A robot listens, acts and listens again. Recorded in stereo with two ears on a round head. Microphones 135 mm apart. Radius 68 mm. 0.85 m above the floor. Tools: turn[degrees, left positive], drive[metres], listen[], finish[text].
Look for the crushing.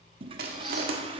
Thought: The crushing: about 70° right or 110° right.
Action: turn[-70]
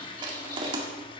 Thought: So it is at 35° right.
Action: turn[-35]
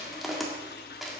Action: finish[Found it: crushing, straight ahead.]